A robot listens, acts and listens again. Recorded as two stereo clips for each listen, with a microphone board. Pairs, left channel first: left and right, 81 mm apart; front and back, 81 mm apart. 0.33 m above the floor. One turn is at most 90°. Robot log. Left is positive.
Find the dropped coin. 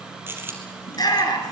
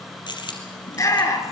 note: The dropped coin: 25° right.
cmd yaw -25
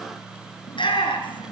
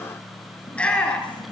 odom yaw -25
end: I heard a dropped coin from this way, but can't make it out now.